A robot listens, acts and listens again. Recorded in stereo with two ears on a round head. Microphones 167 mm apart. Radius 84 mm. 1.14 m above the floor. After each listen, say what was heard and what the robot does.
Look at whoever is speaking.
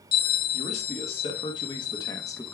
Turn 30° left.
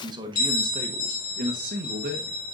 So it is at 55° right. Turn 55° right.
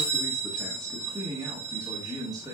The man speaking is now 20° right. Turn 20° right.
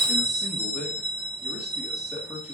Found it: a man speaking, straight ahead.